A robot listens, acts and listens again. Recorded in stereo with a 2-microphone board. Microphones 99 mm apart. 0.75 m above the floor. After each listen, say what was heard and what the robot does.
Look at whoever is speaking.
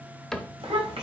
Turn 90° right.
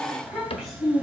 Found it: a child speaking, straight ahead, 2 to 4 m away.